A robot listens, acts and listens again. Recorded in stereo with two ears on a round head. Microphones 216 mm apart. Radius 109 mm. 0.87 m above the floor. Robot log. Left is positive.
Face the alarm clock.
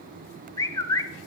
cmd idle
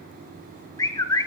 cmd idle
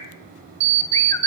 note: The alarm clock: about 50° right or 130° right.
cmd yaw -50
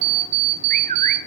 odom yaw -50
note: So it is at 80° right.
cmd yaw -80
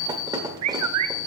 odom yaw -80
note: The alarm clock is now 15° right.
cmd yaw -15
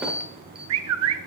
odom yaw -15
end: Facing the alarm clock, 1 to 2 m away.